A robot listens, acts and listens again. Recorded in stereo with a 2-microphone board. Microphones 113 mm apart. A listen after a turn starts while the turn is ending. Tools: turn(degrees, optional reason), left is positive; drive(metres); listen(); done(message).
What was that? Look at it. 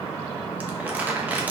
turn(degrees=-30)
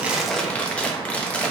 turn(degrees=15, reason="So it is at 15° left.")
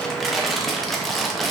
done("Facing the crumpling, under 1 m away.")